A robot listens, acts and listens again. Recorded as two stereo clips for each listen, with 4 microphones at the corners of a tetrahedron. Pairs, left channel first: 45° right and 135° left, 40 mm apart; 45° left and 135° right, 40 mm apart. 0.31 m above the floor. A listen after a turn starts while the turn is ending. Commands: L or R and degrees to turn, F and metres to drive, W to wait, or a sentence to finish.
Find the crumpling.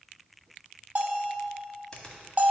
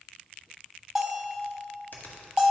W
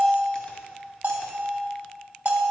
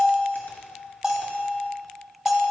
W
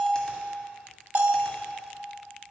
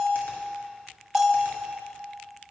I can't make out crumpling, only a bell and a finger snap.